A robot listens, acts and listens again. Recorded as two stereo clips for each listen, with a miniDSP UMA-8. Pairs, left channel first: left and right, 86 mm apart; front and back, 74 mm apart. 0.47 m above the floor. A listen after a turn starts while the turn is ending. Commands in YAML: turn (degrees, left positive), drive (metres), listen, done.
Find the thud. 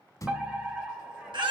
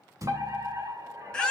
turn: 140
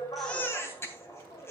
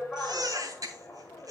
done: "I heard a thud from this way, but can't make it out now."